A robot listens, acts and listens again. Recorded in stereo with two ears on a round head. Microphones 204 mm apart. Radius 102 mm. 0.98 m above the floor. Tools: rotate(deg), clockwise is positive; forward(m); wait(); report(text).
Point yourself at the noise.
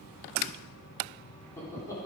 rotate(-15)
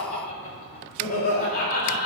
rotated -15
rotate(-40)
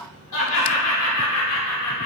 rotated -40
rotate(-95)
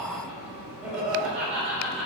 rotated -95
report("Found it: laughter, straight ahead, over 4 m away.")